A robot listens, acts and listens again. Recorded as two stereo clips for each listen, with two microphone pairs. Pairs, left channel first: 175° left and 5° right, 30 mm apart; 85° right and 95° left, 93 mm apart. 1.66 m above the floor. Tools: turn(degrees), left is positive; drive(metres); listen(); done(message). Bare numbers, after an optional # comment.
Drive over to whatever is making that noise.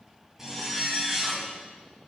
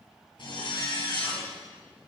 # The zipper: 80° right.
turn(-80)
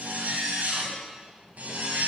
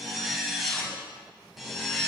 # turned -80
drive(1.0)
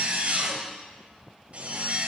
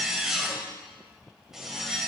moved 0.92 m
# The zipper is now 10° left.
turn(10)
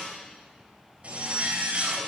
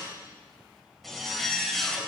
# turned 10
drive(1.0)
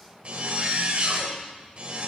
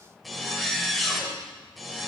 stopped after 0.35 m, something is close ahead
done("Arrived at the zipper, straight ahead.")